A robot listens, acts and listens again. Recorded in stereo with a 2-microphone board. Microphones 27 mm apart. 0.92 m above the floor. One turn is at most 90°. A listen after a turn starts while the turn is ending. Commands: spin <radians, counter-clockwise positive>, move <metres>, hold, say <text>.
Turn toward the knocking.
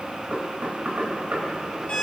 spin -1.57
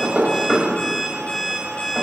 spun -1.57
say Found it: knocking, straight ahead.